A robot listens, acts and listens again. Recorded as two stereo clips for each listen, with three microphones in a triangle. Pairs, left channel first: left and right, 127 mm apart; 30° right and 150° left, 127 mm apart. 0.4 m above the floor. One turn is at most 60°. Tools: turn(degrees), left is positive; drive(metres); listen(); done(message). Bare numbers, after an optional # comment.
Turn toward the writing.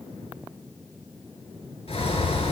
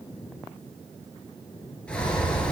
listen()
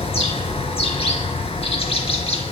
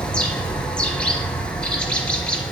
listen()
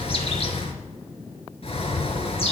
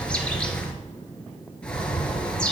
done("I can't make out writing to turn to.")